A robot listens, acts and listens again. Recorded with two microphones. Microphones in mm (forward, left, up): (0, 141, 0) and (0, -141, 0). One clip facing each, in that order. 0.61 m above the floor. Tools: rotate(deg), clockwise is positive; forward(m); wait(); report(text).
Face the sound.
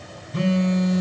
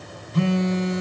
rotate(-65)
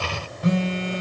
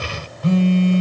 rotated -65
rotate(-25)
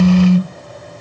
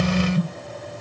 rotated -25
report("Facing the phone buzzing.")